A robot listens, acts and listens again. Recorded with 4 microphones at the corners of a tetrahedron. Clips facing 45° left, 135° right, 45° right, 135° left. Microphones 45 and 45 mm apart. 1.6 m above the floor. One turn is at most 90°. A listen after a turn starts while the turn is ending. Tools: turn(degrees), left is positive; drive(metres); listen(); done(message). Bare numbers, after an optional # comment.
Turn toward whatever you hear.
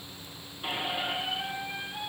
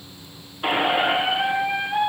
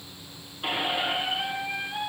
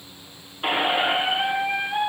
# The squeak: 165° right.
turn(-90)
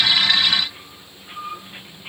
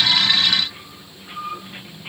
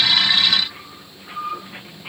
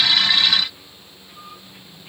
# The squeak is now 55° right.
turn(-55)
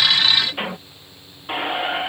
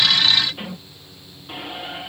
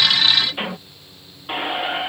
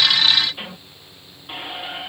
# The squeak is now 10° left.
turn(10)
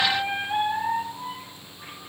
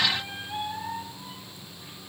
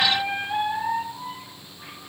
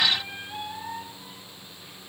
done("Facing the squeak.")